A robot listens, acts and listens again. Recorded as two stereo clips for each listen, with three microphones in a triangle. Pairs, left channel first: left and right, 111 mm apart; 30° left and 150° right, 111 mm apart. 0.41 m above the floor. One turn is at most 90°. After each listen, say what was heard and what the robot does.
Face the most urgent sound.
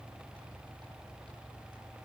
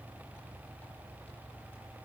Keep listening.
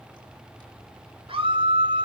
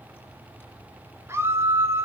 The scream: 90° right. Turn 90° right.
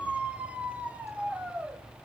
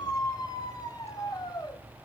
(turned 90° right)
The scream is now 15° right. Turn 15° right.
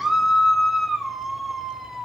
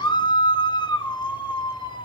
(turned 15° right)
Facing the scream.